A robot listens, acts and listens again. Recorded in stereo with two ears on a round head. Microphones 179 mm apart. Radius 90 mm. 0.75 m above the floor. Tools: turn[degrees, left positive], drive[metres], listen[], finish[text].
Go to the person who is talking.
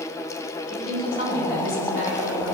Thought: The woman speaking: about 50° left or 130° left.
Action: turn[50]
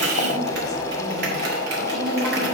Action: listen[]
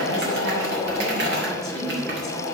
Action: drive[1.0]
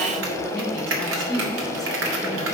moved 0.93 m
Action: drive[1.0]
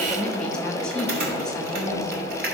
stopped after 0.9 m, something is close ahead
Action: finish[I am next to the woman speaking.]